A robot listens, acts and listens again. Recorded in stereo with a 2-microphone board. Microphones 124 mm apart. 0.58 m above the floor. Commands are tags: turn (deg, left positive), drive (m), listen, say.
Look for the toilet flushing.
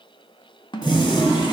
<turn deg="35"/>
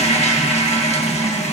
<turn deg="100"/>
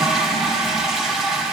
<say>Facing the toilet flushing.</say>